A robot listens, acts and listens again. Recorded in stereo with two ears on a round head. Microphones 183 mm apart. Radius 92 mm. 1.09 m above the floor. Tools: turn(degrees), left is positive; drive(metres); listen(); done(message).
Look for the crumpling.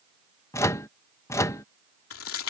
turn(degrees=90)
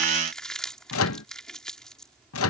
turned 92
done("Found it: crumpling, straight ahead.")